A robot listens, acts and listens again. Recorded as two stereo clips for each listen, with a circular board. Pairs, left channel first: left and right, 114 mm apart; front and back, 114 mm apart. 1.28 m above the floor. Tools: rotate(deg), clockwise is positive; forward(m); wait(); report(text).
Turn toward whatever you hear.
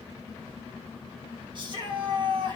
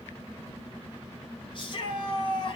rotate(45)
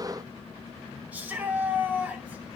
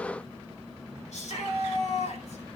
rotate(10)
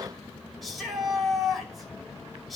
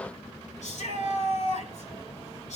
report("Found it: a shout, straight ahead, over 4 m away.")